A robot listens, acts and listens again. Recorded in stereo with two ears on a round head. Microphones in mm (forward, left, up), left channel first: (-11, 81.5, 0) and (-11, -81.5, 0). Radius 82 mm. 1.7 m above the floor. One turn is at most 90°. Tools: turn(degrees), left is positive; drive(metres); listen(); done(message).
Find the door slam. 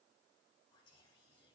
listen()
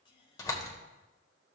turn(degrees=20)
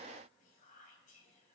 listen()
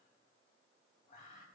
done("I heard a door slam, but can't make it out now. It was about straight ahead or 140° left.")